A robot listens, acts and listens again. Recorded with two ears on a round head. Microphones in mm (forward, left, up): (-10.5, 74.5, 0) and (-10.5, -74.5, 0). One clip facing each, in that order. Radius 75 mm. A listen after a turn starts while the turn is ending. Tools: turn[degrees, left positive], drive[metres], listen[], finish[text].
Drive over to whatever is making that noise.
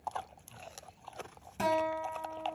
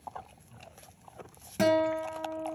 Thought: The guitar: about 65° right or 115° right.
Action: turn[-65]
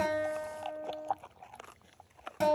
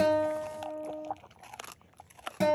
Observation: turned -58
Thought: So it is at 10° right.
Action: turn[-10]
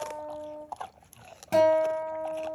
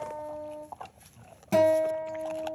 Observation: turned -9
Action: drive[1.0]
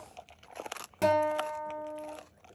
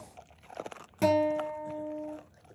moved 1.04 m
Action: drive[1.0]
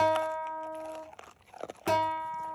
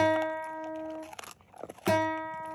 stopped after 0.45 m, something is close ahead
Thought: The guitar is now 10° right.
Action: turn[-10]
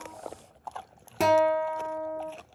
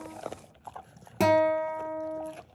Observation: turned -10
Action: finish[Arrived at the guitar, straight ahead.]